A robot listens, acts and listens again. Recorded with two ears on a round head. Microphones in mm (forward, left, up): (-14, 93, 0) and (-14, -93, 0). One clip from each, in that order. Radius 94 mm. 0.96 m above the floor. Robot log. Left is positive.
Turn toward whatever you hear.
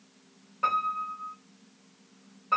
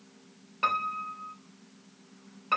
note: The piano: about 50° right or 130° right.
cmd yaw -50
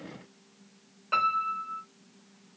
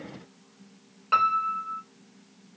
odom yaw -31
note: So it is at 20° right.
cmd yaw -20
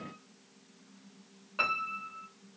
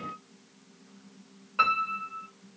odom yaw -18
end: Facing the piano, 1 to 2 m away.